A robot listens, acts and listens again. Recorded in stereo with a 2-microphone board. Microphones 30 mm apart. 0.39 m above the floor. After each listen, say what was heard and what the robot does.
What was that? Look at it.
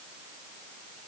Keep listening.
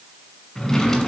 The drawer: about 15° left or 165° left. Turn 15° left.
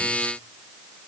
Keep listening.
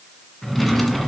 Found it: a drawer, straight ahead.